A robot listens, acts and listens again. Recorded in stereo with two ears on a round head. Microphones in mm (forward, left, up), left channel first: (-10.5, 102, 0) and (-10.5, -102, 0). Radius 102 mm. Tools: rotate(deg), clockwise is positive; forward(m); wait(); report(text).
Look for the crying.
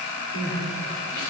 rotate(-65)
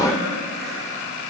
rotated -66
wait()
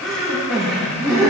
report("Found it: crying, straight ahead.")